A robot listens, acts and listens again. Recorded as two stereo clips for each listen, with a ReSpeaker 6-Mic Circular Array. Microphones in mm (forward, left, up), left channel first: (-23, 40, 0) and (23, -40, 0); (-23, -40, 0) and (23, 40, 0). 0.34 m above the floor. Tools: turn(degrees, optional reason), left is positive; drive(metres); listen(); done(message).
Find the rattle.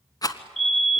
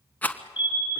turn(degrees=170, reason="The rattle: 170° left.")
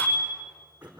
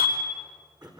listen()
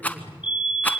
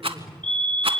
turn(degrees=50, reason="The rattle is now 50° left.")
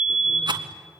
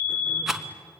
turn(degrees=-25, reason="The rattle is now 25° right.")
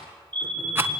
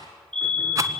done("Facing the rattle.")